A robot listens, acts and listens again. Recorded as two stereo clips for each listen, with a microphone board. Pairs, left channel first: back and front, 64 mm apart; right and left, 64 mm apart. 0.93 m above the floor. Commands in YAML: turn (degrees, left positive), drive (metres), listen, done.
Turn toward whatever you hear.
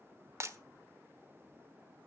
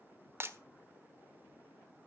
turn: 40
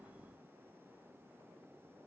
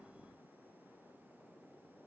done: "Facing where the breaking glass came from. I can't hear it now."